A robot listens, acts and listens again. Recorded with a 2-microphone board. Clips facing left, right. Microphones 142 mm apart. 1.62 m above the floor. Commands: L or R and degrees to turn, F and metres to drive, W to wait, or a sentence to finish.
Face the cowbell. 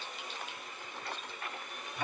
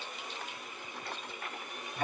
W
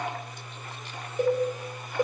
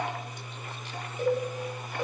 L40
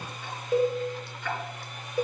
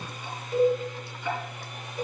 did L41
L100
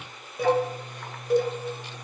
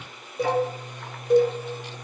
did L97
Found it: a cowbell, straight ahead.